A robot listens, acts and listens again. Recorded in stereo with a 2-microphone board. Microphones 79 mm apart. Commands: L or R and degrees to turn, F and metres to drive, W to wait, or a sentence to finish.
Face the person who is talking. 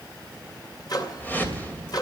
W
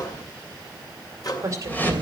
R40
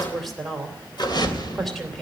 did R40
Facing the woman speaking.